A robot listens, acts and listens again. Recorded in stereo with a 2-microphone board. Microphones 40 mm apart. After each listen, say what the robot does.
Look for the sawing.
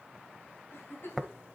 Keep listening.
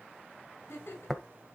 Keep listening.
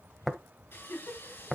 Turn 60° left.
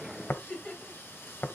Turn 60° left.
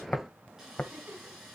Turn 10° right.
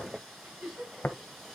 Facing the sawing, over 4 m away.